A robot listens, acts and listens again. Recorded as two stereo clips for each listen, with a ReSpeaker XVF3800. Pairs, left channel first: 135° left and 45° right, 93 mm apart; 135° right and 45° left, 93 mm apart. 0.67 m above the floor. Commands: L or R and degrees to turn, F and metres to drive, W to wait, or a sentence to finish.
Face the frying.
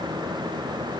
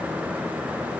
W
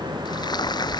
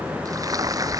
L95
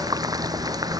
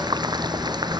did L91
Found it: frying, straight ahead.